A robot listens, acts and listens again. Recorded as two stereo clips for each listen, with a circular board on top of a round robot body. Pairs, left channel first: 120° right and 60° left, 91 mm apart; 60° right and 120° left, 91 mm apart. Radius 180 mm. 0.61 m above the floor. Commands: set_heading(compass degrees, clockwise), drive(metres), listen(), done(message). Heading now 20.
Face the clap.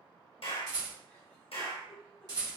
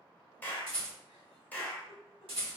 set_heading(155)
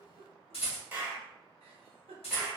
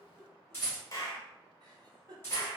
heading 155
set_heading(165)
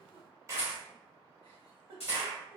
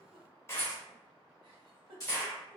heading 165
done("Found it: a clap, straight ahead.")